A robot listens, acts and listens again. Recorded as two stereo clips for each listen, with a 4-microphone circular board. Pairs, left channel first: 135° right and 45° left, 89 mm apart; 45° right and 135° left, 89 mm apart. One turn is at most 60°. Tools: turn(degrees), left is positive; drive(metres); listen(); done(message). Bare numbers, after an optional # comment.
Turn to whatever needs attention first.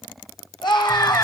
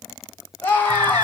# The scream: 110° right.
turn(-60)
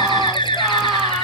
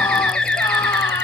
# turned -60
# Nothing new. It was at 50° right.
turn(-50)
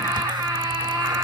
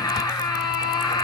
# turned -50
# The scream is now 10° right.
turn(-10)
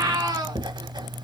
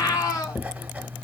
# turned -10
done("Found it: a scream, straight ahead, over 4 m away.")